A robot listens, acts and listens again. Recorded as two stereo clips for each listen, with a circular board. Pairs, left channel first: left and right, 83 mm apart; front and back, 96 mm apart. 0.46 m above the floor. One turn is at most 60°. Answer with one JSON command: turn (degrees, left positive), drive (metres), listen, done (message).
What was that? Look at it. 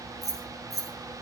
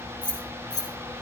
{"turn": -45}
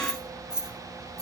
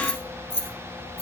{"turn": -10}
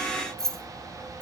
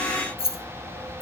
{"done": "Found it: keys jangling, straight ahead."}